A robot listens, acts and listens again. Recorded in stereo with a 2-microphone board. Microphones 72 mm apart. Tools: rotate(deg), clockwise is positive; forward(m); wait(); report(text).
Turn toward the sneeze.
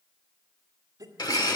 rotate(50)
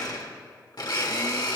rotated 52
wait()
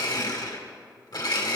report("I heard a sneeze, but can't make it out now. It was about 5° left or 80° right.")